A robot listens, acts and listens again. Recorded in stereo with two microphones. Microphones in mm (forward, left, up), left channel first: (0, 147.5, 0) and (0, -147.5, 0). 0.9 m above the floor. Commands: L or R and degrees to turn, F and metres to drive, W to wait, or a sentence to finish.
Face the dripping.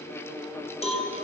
W
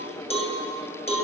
W
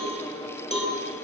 I can't make out dripping, only a cowbell.